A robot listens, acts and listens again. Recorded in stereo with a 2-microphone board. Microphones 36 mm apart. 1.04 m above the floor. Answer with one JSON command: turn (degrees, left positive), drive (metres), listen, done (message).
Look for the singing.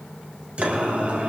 {"turn": -40}
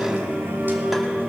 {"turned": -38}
{"turn": -105}
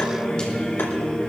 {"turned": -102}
{"turn": 30}
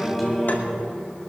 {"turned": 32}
{"done": "Facing the singing."}